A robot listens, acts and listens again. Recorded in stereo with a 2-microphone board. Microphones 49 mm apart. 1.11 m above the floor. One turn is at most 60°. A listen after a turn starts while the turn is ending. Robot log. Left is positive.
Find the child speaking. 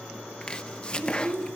note: The child speaking: about 65° right or 115° right.
cmd yaw -60
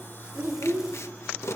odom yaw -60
note: So it is at 65° right.
cmd yaw -60
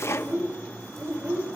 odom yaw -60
note: The child speaking is now 65° right.
cmd yaw -60
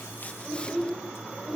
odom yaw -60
note: The child speaking is now 15° right.
cmd yaw -15
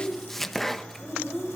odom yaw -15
end: Found it: a child speaking, straight ahead, 2 to 4 m away.